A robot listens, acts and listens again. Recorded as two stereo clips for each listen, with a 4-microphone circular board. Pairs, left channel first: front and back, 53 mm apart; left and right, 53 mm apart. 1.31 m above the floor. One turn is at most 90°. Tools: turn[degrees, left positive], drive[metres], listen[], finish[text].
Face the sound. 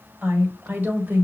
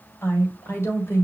Thought: The woman speaking: 125° left.
Action: turn[90]
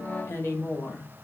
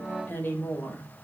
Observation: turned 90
Thought: The woman speaking is now 40° left.
Action: turn[40]
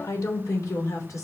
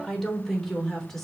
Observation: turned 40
Action: finish[Found it: a woman speaking, straight ahead.]